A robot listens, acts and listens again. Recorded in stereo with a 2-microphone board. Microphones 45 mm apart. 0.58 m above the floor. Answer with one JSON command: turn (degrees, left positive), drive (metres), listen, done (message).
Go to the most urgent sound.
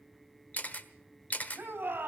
{"turn": -45}
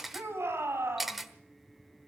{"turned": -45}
{"turn": -90}
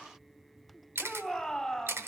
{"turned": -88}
{"drive": 1.0}
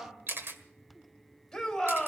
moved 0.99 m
{"drive": 1.0}
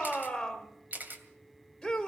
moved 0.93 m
{"turn": 10}
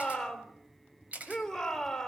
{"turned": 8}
{"drive": 1.0}
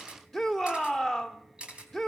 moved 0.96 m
{"drive": 1.0}
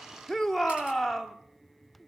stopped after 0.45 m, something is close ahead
{"done": "I am next to the shout."}